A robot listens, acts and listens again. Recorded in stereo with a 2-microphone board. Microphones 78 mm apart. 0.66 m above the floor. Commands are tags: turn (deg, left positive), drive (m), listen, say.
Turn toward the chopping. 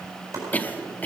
<turn deg="-45"/>
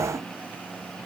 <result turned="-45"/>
<listen/>
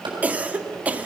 <turn deg="-90"/>
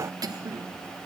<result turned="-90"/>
<listen/>
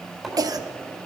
<say>Found it: chopping, straight ahead, over 4 m away.</say>